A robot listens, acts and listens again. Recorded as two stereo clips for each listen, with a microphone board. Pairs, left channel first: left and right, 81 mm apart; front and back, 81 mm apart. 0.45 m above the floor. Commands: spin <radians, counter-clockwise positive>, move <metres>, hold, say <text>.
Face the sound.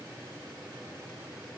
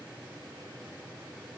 hold
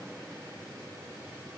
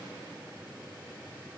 hold
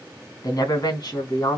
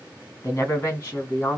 spin 1.05
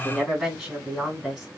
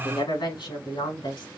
say Found it: a woman speaking, straight ahead.